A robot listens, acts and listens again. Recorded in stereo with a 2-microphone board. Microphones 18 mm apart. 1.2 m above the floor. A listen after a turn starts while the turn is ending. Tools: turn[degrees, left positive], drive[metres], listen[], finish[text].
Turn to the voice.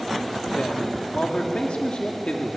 Action: turn[90]
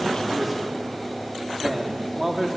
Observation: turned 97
Thought: So it is at 15° right.
Action: turn[-15]
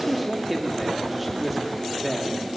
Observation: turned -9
Action: finish[Found it: a man speaking, straight ahead, 2 to 4 m away.]